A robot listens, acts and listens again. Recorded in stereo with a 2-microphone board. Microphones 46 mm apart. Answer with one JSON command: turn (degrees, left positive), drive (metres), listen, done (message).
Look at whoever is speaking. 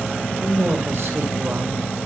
{"turn": -70}
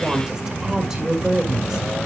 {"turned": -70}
{"turn": -15}
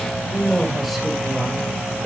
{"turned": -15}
{"done": "Facing the woman speaking, 1 to 2 m away."}